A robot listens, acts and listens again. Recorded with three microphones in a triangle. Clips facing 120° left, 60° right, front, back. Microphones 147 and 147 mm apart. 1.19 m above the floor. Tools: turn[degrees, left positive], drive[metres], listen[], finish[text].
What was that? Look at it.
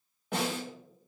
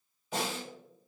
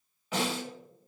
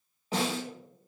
Thought: The snare drum: 125° left.
Action: turn[125]
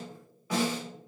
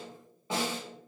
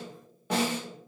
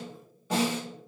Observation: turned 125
Action: finish[Facing the snare drum, under 1 m away.]